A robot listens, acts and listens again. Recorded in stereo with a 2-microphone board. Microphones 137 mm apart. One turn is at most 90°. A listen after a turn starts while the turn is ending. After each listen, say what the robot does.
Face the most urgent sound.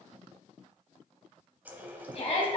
Turn 45° left.
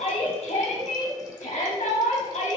Turn 80° left.
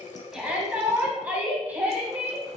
Turn 10° right.
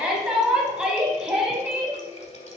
Facing the shout, 1 to 2 m away.